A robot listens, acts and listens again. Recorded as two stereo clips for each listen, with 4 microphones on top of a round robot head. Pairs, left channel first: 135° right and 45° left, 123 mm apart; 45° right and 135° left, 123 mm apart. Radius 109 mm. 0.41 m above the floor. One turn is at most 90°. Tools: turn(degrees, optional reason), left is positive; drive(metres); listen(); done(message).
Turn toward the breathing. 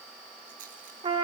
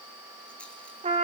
listen()
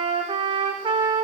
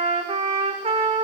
listen()
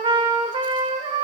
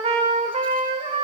done("I can't make out breathing, only a trumpet.")